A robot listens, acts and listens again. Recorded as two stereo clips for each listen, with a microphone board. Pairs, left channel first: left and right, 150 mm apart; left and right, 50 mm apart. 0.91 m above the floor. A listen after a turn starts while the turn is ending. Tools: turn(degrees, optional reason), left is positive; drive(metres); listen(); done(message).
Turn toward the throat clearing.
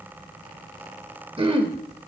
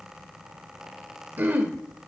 turn(degrees=-35, reason="The throat clearing: about 35° right or 145° right.")
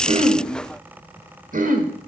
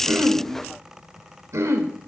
turn(degrees=-105, reason="So it is at 105° right.")
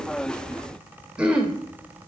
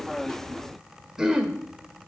turn(degrees=-10, reason="The throat clearing is now 10° right.")
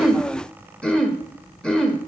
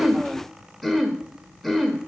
done("Found it: throat clearing, straight ahead, under 1 m away.")